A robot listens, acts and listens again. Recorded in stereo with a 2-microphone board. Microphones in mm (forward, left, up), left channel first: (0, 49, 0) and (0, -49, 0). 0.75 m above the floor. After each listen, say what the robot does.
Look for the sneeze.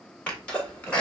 Turn 30° left.
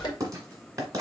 Turn 140° left.
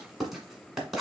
I heard a sneeze from this way, but can't make it out now.